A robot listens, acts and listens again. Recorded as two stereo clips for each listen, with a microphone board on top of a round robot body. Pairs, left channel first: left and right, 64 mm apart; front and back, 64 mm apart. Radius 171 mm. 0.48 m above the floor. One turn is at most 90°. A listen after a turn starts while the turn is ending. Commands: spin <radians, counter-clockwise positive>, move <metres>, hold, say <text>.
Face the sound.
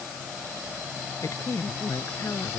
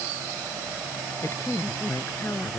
spin 0.87
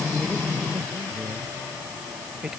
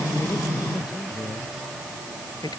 spin -0.17
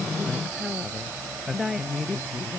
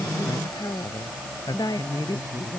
say Facing the woman speaking.